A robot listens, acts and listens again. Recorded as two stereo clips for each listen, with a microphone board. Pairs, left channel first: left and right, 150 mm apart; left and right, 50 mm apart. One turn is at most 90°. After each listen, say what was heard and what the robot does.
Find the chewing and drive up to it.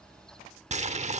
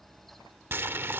Keep listening.
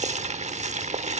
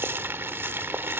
Keep listening.
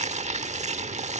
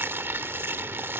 I can't make out chewing, only boiling.